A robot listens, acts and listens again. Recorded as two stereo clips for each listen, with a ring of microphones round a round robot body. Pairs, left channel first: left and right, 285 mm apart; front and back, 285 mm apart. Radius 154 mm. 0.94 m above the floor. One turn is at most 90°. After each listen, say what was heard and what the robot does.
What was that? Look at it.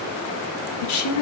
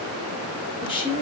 The woman speaking: 75° left. Turn 75° left.
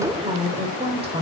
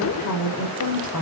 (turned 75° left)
The woman speaking is now 20° right. Turn 20° right.
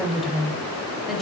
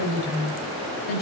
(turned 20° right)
Found it: a woman speaking, straight ahead.